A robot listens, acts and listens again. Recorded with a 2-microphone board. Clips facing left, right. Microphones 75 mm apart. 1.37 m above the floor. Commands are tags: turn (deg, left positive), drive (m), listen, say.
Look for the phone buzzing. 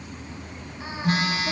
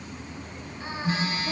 <turn deg="70"/>
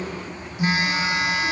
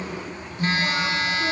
<turn deg="15"/>
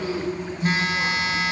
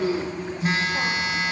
<say>Found it: a phone buzzing, straight ahead.</say>